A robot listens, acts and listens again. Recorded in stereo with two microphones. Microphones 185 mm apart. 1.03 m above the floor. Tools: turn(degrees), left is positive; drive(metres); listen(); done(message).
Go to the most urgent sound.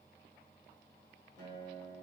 listen()
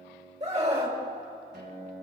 turn(degrees=-35)
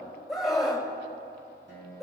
drive(metres=1.0)
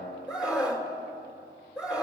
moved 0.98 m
drive(metres=1.0)
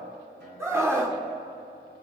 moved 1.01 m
turn(degrees=-15)
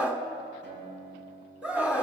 drive(metres=1.0)
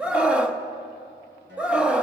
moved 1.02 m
drive(metres=1.0)
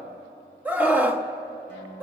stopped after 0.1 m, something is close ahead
turn(degrees=-10)
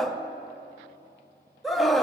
done("I am next to the scream.")